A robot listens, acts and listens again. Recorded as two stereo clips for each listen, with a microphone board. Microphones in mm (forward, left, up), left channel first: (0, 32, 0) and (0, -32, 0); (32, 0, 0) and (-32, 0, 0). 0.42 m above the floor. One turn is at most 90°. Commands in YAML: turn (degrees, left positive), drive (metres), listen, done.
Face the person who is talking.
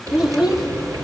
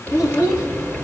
turn: -10
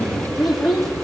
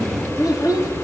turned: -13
done: "Found it: a child speaking, straight ahead, 1 to 2 m away."